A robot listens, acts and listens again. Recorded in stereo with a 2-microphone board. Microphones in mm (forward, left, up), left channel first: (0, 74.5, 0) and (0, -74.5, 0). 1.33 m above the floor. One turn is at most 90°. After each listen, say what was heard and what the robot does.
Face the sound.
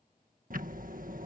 The ticking: about 65° right or 115° right. Turn 65° right.
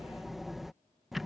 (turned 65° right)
Found it: ticking, straight ahead.